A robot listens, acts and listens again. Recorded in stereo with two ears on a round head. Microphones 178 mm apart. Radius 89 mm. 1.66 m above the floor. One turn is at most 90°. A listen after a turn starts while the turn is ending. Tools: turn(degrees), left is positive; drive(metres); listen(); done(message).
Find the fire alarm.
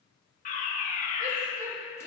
turn(degrees=40)
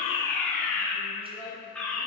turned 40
done("Found it: a fire alarm, straight ahead, 1 to 2 m away.")